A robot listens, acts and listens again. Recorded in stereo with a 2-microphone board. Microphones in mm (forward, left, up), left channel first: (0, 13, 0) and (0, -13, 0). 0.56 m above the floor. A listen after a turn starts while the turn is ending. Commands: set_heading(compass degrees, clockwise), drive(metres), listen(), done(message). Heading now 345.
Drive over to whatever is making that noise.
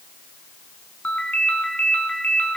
set_heading(280)
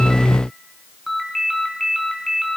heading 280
drive(1.0)
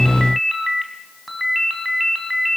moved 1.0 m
drive(1.0)
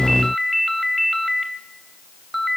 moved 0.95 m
drive(1.0)
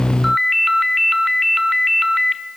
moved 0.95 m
drive(1.0)
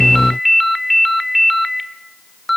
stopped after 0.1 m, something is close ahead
done("Arrived at the ringtone, straight ahead.")